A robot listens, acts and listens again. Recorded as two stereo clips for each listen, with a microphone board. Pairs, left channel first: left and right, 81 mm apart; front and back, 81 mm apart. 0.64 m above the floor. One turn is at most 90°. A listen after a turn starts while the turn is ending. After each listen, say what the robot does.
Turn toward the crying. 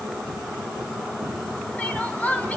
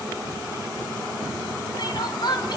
Turn 20° left.
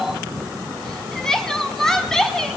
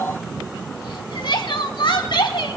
Found it: crying, straight ahead, 1 to 2 m away.